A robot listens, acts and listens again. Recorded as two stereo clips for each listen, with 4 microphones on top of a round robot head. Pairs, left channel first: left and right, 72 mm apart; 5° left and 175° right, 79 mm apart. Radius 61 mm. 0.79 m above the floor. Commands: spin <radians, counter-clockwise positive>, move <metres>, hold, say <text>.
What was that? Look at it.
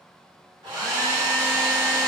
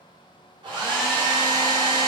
spin -2.18
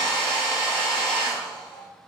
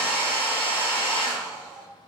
spin 0.17
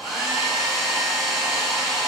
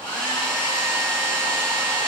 say Found it: a hair dryer, straight ahead, under 1 m away.